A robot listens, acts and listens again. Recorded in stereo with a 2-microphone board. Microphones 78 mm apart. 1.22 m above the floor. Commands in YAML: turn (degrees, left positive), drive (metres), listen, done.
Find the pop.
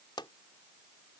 turn: 90
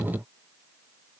done: "I heard a pop from this way, but can't make it out now."